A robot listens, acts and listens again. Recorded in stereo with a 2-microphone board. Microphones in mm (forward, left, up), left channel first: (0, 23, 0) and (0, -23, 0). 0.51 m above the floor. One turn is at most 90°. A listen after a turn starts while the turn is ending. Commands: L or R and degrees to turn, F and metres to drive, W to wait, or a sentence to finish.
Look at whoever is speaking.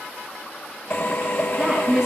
R30
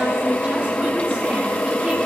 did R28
W
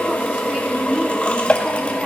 R90
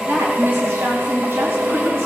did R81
R70
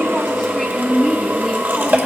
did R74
Facing the woman speaking, 2 to 4 m away.